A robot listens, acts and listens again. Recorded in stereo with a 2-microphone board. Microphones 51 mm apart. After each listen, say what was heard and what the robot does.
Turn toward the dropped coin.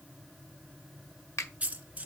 The dropped coin: about 25° right or 155° right. Turn 25° right.
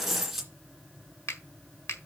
Found it: a dropped coin, straight ahead.